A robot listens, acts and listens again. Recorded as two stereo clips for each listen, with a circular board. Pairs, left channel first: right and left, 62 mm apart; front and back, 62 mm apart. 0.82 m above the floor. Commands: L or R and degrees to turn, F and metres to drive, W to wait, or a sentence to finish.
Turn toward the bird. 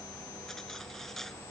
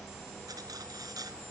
W
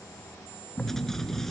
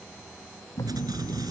R20
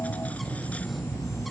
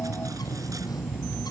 Facing the bird.